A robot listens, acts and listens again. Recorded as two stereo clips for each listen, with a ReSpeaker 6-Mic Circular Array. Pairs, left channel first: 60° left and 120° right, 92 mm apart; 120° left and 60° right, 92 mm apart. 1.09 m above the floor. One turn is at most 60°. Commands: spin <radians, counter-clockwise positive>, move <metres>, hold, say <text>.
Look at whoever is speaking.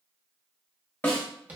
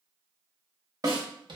hold
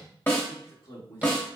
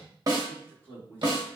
spin 0.79
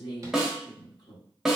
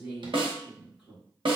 spin 0.35
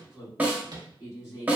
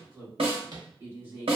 say Found it: a man speaking, straight ahead, 1 to 2 m away.